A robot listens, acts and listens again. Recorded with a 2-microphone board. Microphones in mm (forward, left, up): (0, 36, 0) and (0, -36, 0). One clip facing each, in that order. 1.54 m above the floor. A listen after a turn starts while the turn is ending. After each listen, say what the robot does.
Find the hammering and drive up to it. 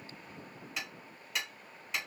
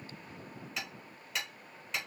Turn 30° left.
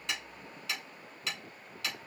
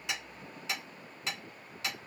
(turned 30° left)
Turn 25° right.
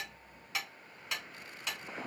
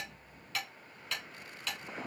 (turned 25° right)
Turn 15° left.
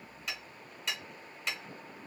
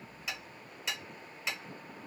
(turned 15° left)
Drive 1.0 m forward.
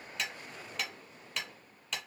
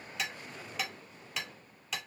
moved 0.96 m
Drive 1.0 m forward.
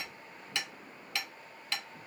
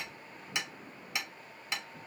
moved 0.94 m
Turn 20° right.
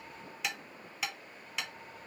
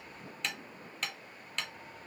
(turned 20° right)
Drive 1.0 m forward.
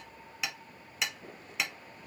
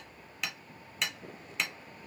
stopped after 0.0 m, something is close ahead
I am next to the hammering.